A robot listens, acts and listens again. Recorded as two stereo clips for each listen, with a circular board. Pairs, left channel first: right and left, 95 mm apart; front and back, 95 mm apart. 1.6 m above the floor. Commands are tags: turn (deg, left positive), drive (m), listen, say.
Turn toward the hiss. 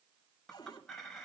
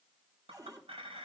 <listen/>
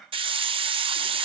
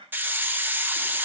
<turn deg="110"/>
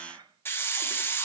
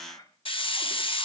<turn deg="-25"/>
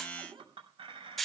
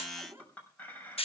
<say>Facing the hiss.</say>